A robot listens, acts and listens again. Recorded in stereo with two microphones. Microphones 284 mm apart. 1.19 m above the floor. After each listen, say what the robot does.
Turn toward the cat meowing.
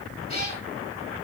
Turn 20° left.
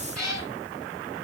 Found it: a cat meowing, straight ahead, over 4 m away.